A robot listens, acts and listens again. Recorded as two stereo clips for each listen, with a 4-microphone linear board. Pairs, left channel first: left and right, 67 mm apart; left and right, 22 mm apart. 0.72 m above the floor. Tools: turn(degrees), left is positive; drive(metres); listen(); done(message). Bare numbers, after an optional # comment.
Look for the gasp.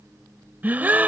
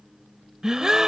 # The gasp: about 25° right or 155° right.
turn(-25)
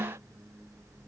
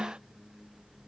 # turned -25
# So it is at 125° right.
turn(-125)
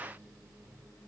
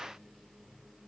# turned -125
done("I heard a gasp from this way, but can't make it out now.")